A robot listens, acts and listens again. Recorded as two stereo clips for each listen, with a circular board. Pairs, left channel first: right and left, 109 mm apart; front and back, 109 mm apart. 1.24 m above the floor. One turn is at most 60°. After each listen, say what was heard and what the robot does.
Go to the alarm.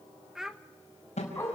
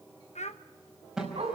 The alarm: 95° right. Turn 60° right.
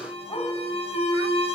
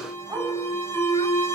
The alarm is now 65° right. Turn 60° right.
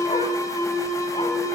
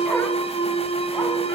The alarm is now 30° right. Turn 30° right.
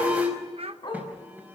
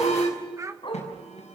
The alarm is now 15° left. Turn 15° left.
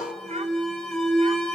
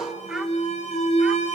Drive 1.0 m forward.
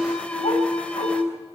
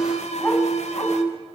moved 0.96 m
The alarm is now 10° right. Turn 10° right.
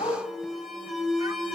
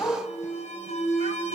Drive 1.0 m forward.
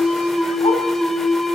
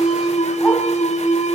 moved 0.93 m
Drive 1.0 m forward.
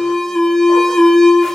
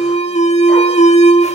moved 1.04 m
Drive 1.0 m forward.
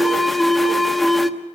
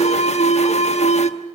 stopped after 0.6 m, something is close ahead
Arrived at the alarm, straight ahead.